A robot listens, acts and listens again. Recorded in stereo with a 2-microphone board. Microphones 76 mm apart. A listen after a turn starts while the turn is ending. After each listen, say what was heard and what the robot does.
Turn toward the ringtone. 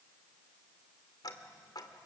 Keep listening.
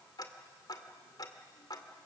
Keep listening.
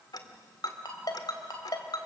The ringtone: about 60° left or 120° left. Turn 60° left.
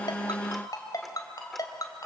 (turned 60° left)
So it is at 55° left. Turn 55° left.
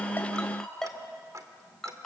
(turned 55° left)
Found it: a ringtone, straight ahead.